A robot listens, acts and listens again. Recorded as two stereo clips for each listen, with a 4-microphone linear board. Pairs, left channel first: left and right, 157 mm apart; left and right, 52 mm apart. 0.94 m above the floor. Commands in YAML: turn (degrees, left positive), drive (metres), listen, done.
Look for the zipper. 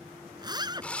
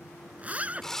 turn: -25
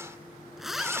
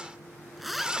done: "Facing the zipper."